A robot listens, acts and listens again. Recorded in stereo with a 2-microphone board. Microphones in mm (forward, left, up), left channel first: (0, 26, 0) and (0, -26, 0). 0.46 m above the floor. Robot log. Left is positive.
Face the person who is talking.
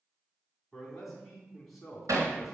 cmd yaw +30
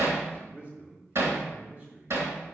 note: So it is at 30° right.
cmd yaw -30
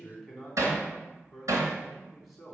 end: Facing the man speaking, 2 to 4 m away.